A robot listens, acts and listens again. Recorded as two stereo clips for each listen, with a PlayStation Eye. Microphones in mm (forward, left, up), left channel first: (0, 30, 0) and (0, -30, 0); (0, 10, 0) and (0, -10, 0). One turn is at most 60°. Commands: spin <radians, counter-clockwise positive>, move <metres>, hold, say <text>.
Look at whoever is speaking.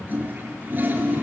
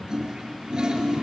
hold
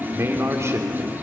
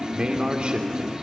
spin -0.87
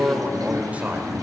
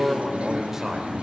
spin -0.44
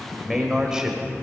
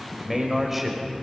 spin -0.17
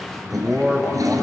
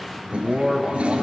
say Facing the man speaking, over 4 m away.